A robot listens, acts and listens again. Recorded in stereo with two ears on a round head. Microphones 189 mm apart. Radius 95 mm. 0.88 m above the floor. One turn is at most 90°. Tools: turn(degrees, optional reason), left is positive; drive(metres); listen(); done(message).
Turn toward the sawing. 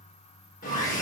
turn(degrees=40, reason="The sawing: about 40° left or 140° left.")
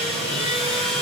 done("Found it: sawing, straight ahead, 2 to 4 m away.")